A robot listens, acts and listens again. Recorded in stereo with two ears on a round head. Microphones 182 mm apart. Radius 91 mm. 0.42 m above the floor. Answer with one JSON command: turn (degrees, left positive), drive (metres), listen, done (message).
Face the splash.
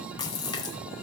{"turn": 20}
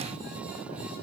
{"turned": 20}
{"listen": true}
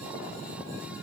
{"done": "I heard a splash, but can't make it out now. It was about straight ahead or 140° left."}